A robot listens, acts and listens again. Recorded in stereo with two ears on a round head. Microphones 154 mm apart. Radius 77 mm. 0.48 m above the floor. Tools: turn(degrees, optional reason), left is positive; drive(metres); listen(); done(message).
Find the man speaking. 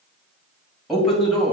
turn(degrees=30)
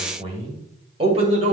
turn(degrees=-40, reason="So it is at 40° right.")
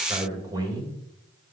turn(degrees=-25, reason="The man speaking is now 25° right.")
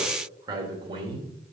turn(degrees=-35, reason="The man speaking is now 35° right.")
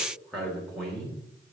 done("Found it: a man speaking, straight ahead, 1 to 2 m away.")